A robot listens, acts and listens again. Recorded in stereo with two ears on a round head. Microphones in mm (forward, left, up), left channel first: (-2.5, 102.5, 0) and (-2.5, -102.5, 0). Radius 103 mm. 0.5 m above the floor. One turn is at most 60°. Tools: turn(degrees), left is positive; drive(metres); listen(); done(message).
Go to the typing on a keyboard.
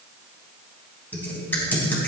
turn(degrees=30)
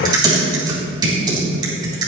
turn(degrees=-20)
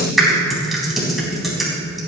drive(metres=1.0)
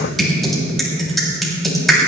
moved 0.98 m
drive(metres=1.0)
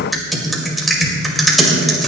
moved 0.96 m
drive(metres=1.0)
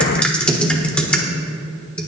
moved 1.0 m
turn(degrees=10)
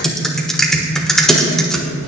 drive(metres=1.0)
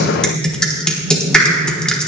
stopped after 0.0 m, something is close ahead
done("Arrived at the typing on a keyboard, straight ahead.")